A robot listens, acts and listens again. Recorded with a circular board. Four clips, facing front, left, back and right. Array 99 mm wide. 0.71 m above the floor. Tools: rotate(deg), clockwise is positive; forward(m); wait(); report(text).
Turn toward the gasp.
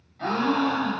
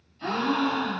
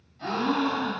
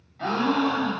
rotate(60)
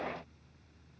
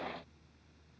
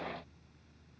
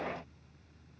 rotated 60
report("Facing where the gasp came from. I can't hear it now.")